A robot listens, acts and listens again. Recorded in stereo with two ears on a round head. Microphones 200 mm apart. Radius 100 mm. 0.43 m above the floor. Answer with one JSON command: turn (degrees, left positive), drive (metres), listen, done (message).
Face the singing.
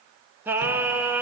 {"turn": -30}
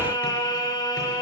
{"turn": 20}
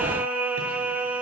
{"done": "Found it: singing, straight ahead."}